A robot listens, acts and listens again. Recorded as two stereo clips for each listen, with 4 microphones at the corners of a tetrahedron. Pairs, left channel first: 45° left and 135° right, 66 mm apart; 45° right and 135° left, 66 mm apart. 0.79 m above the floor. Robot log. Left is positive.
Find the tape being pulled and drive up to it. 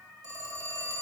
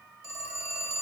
cmd idle
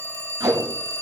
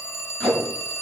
note: The tape being pulled: 120° right.
cmd yaw -120
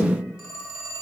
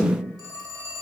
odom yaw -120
note: The tape being pulled is now 20° left.
cmd yaw +20
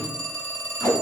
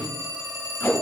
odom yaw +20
cmd fwd 1.0
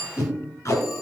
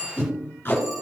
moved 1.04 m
cmd fwd 1.0
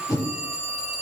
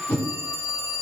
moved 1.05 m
note: The tape being pulled is now 15° left.
cmd yaw +15
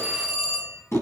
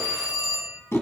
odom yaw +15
cmd fwd 1.0
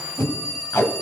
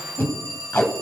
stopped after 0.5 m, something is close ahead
end: I am next to the tape being pulled.